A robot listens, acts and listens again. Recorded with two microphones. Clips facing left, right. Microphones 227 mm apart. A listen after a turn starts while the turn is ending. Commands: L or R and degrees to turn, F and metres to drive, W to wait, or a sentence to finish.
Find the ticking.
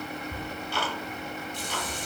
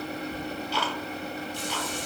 L50
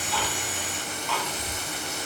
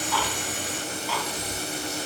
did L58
Facing the ticking, 1 to 2 m away.